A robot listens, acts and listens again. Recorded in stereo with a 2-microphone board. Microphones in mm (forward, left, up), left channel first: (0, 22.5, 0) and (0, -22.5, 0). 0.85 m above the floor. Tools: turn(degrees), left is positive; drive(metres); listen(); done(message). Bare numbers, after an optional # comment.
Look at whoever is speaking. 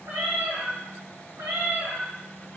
listen()
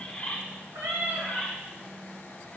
listen()
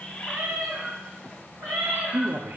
# The man speaking: about 50° right or 130° right.
turn(-50)
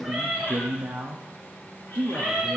# So it is at 75° right.
turn(-75)
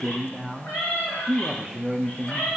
done("Found it: a man speaking, straight ahead, 1 to 2 m away.")